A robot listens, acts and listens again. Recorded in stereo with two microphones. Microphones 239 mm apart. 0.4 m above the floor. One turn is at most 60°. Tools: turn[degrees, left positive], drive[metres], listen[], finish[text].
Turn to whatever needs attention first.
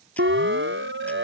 Thought: The siren: about 60° right or 120° right.
Action: turn[-60]
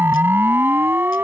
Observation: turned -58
Thought: So it is at 10° right.
Action: turn[-10]
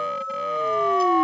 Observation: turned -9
Action: finish[Facing the siren.]